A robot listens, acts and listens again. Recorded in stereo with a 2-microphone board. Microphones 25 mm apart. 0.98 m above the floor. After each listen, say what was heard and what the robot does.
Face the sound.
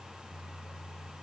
Keep listening.
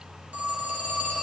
The phone ringing: about 70° right or 110° right. Turn 70° right.
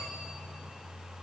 Keep listening.
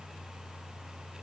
Keep listening.
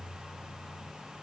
I heard a phone ringing, but can't make it out now. It was about straight ahead or 40° right.